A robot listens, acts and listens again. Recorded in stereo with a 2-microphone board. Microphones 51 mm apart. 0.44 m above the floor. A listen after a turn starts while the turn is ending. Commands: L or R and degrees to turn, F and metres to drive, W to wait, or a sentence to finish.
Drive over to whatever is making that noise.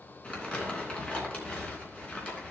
L20
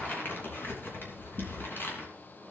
L140
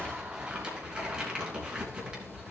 R15
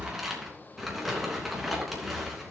F1.0
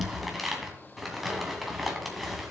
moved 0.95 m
F1.0
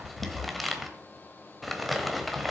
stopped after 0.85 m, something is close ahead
Arrived at the crumpling, straight ahead.